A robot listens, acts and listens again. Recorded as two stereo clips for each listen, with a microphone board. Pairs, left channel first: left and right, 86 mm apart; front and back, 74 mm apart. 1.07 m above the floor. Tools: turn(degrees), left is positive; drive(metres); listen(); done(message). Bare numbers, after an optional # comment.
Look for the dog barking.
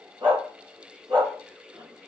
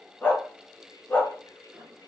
# The dog barking: 65° right.
turn(-65)
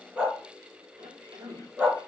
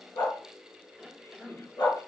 # The dog barking is now 15° right.
turn(-15)
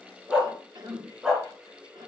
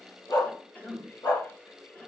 done("Found it: a dog barking, straight ahead, over 4 m away.")